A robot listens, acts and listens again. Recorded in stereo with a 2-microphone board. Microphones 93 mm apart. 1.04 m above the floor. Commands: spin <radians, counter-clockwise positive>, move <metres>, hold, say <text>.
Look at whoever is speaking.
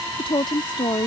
spin 0.96
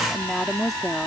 say Found it: a woman speaking, straight ahead.